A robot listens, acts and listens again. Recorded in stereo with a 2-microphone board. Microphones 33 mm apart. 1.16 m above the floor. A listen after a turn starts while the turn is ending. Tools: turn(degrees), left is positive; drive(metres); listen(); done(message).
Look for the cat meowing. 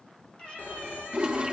turn(degrees=30)
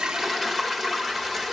listen()
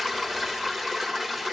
listen()
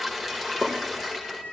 turn(degrees=30)
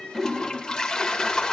listen()
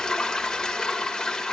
listen()
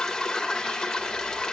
done("I heard a cat meowing, but can't make it out now. It was about straight ahead or 120° left.")